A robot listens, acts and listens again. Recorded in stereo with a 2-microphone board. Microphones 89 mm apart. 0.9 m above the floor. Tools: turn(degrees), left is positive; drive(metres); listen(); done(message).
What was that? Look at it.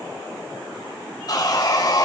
turn(degrees=50)
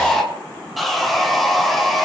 done("Found it: sawing, straight ahead.")